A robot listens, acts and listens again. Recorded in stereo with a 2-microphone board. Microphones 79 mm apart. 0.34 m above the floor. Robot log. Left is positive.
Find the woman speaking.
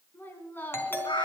note: The woman speaking: about 25° left or 155° left.
cmd yaw +25
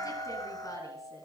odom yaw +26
note: So it is at 135° left.
cmd yaw +135
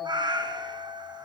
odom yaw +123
note: Nothing new. It was at 10° left.
cmd yaw +10
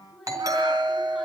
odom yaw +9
end: Found it: a woman speaking, straight ahead.